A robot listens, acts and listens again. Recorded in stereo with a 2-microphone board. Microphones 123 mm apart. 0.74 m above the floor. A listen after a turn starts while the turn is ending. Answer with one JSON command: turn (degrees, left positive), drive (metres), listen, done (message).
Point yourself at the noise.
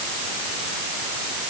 {"listen": true}
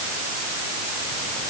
{"listen": true}
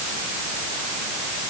{"done": "I can't make out anything to turn to."}